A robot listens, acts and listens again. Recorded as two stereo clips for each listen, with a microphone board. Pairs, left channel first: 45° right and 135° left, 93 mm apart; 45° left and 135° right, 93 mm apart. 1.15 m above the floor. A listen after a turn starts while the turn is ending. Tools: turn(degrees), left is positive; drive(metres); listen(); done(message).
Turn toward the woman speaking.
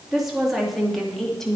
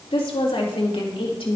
turn(degrees=40)
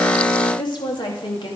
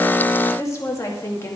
turn(degrees=-20)
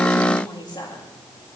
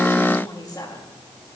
done("Facing the woman speaking.")